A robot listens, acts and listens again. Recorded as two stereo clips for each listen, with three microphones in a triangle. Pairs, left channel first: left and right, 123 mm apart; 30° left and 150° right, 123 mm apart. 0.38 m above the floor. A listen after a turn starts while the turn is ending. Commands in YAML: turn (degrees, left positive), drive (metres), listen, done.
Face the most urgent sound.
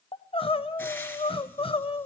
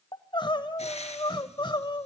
turn: 70
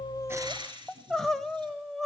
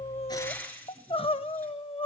done: "Found it: crying, straight ahead, 1 to 2 m away."